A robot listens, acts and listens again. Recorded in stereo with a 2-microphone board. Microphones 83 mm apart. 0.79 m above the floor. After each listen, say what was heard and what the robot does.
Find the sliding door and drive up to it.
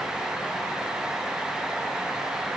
Keep listening.
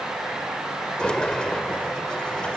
Turn 30° left.
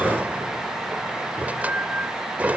So it is at 20° right. Turn 20° right.
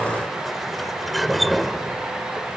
Drive 1.0 m forward.
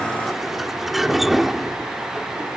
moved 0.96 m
Drive 1.0 m forward.
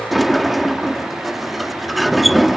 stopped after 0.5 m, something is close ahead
I am next to the sliding door.